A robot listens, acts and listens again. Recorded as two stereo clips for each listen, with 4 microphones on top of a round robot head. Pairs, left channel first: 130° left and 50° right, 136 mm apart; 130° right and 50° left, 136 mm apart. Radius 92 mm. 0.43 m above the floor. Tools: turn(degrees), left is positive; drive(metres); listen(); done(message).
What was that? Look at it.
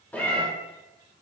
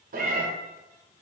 turn(degrees=50)
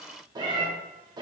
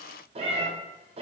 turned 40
turn(degrees=10)
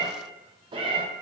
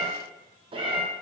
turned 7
done("Found it: a cat meowing, straight ahead, 1 to 2 m away.")